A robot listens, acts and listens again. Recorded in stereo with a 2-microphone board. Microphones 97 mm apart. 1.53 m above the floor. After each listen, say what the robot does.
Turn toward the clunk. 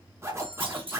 Turn 70° right.
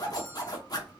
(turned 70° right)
Keep listening.
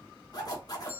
I heard a clunk, but can't make it out now. It was about straight ahead or 40° right.